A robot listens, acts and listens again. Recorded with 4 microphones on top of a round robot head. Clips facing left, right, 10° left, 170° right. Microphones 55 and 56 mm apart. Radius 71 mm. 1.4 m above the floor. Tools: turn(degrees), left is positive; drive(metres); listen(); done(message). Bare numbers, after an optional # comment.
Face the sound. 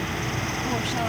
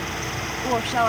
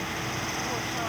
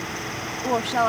# The woman speaking: 145° right.
turn(-145)
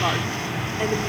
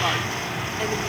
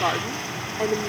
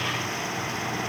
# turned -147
# The woman speaking is now 10° left.
turn(10)
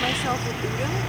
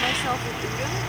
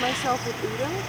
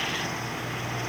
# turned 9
listen()
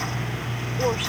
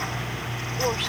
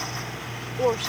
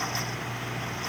listen()
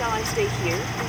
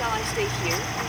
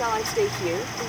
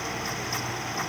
# The woman speaking is now 10° left.
turn(10)
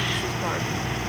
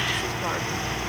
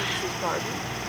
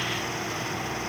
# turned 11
listen()
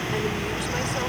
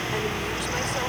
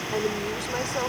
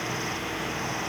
listen()
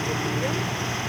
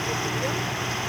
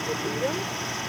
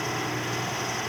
done("I heard a woman speaking from this way, but can't make it out now.")